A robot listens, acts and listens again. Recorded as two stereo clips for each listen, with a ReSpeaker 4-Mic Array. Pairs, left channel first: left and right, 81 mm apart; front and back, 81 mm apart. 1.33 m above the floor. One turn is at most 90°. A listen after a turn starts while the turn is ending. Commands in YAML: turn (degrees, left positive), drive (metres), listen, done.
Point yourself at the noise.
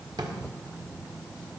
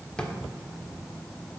turn: -80
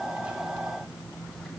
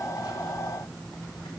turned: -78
listen: true
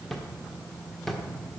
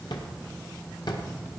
done: "Facing the drawer, 1 to 2 m away."